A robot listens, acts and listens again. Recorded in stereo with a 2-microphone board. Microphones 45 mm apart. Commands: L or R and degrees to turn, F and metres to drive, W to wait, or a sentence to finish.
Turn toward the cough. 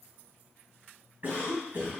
R40
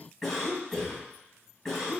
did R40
Found it: a cough, straight ahead.